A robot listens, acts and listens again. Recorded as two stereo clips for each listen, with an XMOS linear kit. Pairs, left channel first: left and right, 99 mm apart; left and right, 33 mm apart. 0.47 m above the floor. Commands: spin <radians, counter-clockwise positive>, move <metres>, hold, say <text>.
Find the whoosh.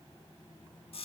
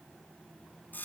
hold
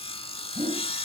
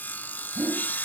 spin -1.31
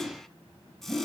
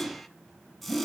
spin -0.26
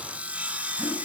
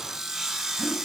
hold
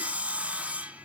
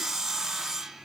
hold
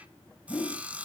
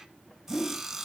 say Found it: a whoosh, straight ahead.